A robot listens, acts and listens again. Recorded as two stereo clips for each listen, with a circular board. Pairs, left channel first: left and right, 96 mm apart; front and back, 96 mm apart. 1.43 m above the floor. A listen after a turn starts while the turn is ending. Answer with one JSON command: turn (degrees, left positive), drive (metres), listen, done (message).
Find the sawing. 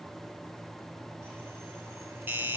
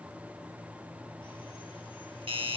{"listen": true}
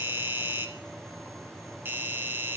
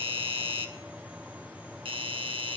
{"listen": true}
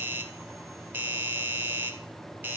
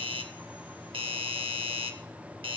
{"done": "I can't make out sawing to turn to."}